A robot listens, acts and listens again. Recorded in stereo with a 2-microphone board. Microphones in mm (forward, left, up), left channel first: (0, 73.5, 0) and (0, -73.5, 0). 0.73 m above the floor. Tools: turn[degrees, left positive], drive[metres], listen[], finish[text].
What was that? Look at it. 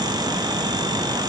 Action: listen[]
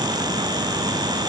Action: listen[]
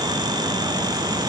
Action: finish[I can't make out anything.]